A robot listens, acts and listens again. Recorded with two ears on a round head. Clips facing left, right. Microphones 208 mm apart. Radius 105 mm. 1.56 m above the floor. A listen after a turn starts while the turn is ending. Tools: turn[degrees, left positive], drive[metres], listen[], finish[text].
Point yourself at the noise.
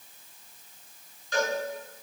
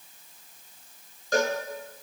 Thought: The cowbell: about 40° right or 140° right.
Action: turn[-40]
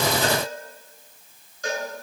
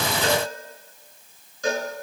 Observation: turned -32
Thought: So it is at 105° right.
Action: turn[-105]
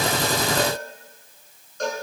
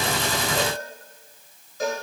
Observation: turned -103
Action: finish[Facing the cowbell.]